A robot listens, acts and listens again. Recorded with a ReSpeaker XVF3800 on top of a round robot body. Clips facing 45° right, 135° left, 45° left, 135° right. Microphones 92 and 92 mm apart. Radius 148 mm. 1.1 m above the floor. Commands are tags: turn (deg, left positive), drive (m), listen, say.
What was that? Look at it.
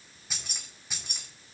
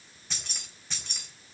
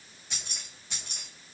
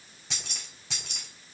<turn deg="-125"/>
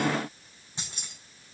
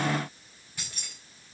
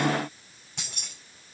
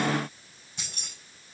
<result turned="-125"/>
<turn deg="25"/>
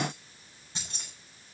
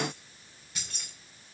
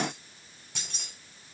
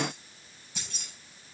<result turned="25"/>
<turn deg="20"/>
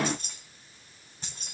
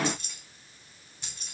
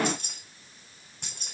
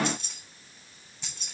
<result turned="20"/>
<turn deg="10"/>
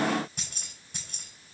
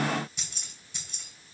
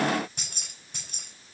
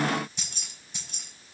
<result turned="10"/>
<say>Found it: keys jangling, straight ahead, 2 to 4 m away.</say>